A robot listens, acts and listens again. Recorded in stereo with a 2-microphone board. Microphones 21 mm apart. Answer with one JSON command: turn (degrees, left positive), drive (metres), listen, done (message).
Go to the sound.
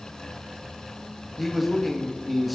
{"turn": 30}
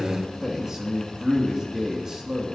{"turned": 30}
{"turn": -30}
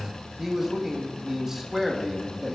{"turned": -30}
{"turn": -20}
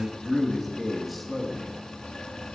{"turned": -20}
{"drive": 1.0}
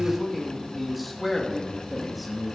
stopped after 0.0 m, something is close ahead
{"done": "Something is in my way. I am facing the man speaking but have not reached it."}